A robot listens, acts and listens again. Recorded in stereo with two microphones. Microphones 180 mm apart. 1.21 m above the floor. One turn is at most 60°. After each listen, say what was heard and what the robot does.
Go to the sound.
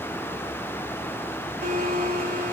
The blender: about 55° right or 125° right. Turn 55° right.
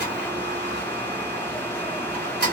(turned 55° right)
So it is at 70° right. Turn 60° right.
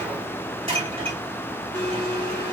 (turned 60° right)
The blender is now 30° right. Turn 30° right.
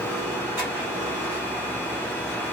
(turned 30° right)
The blender is now 15° right. Turn 15° right.
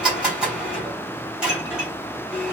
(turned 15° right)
Drive 1.0 m forward.
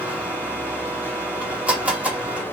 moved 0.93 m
The blender is now 10° right. Turn 10° right.
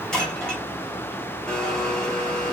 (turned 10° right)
Drive 1.0 m forward.
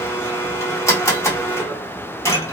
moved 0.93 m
The blender is now 20° left. Turn 20° left.
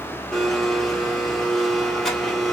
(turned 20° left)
Drive 1.0 m forward.
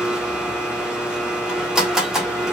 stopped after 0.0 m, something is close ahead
Arrived at the blender, straight ahead.